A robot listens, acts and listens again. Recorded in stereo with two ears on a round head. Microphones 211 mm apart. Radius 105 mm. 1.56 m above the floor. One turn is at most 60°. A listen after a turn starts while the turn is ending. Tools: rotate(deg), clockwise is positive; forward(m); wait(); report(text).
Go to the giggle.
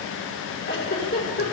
rotate(-40)
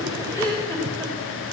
forward(1.0)
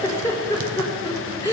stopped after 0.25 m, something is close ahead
rotate(-10)
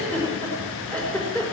report("Blocked. The giggle is further on, straight ahead.")